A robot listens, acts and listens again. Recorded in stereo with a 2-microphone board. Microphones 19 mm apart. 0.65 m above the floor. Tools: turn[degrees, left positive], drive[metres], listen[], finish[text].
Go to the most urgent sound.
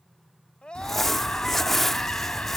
Thought: The scream: about 50° left or 130° left.
Action: turn[50]
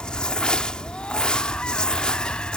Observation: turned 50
Action: listen[]
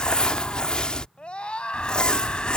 Thought: So it is at 80° left.
Action: turn[80]
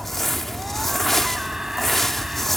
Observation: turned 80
Thought: The scream is now 20° right.
Action: turn[-20]
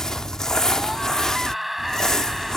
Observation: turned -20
Action: drive[1.0]
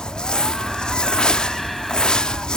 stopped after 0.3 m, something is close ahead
Action: listen[]
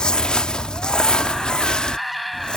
Thought: The scream is now 10° left.
Action: turn[10]
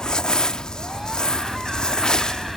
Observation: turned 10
Action: listen[]
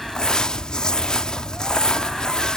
Action: listen[]
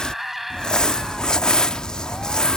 Action: finish[Blocked. The scream is further on, straight ahead.]